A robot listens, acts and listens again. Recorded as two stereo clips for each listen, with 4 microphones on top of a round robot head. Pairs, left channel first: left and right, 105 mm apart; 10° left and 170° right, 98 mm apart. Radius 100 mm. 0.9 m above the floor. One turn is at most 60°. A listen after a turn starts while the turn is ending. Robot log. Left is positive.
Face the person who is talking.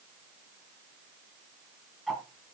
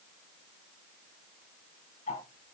cmd idle
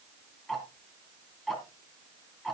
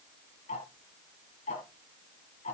cmd idle
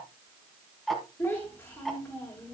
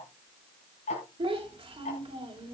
note: The child speaking: 165° left.
cmd yaw +60
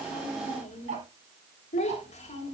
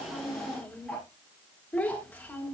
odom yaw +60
note: The child speaking is now 85° left.
cmd yaw +60
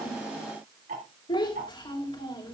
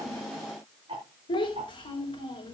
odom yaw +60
note: The child speaking is now 45° left.
cmd yaw +45
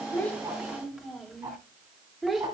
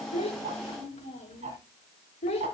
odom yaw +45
end: Found it: a child speaking, straight ahead.